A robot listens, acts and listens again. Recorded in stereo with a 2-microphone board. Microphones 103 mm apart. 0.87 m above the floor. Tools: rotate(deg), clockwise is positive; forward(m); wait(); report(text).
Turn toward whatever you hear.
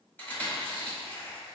rotate(-20)
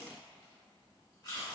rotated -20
rotate(-140)
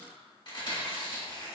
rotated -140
rotate(-50)
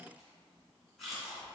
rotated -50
report("Found it: chewing, straight ahead, 1 to 2 m away.")